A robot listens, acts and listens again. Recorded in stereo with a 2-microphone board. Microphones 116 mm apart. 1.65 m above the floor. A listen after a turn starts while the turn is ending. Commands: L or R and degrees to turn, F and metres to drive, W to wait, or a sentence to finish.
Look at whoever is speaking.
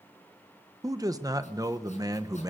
R30
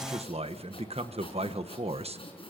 R120
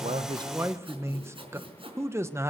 R25
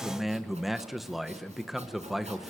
Found it: a man speaking, straight ahead.